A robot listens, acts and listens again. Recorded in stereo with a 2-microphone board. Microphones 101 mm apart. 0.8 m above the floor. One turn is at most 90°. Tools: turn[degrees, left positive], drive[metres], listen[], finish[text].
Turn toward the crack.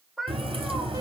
Thought: The crack: about 65° right or 115° right.
Action: turn[-65]
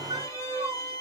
Action: listen[]
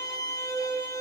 Action: finish[I heard a crack, but can't make it out now. It was about straight ahead or 50° right.]